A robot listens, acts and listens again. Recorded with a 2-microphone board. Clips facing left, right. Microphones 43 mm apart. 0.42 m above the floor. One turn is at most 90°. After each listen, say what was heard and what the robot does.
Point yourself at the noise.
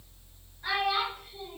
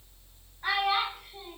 The child speaking: about 40° right or 140° right. Turn 40° right.
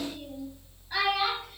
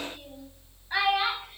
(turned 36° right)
So it is at 30° right. Turn 30° right.
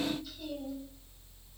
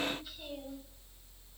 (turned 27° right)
Keep listening.
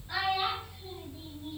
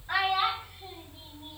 The child speaking is now 50° right. Turn 50° right.
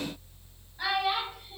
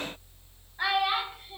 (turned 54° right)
The child speaking is now 15° right. Turn 15° right.
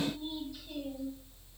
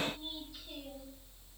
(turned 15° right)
Keep listening.
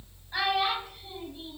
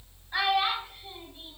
Facing the child speaking.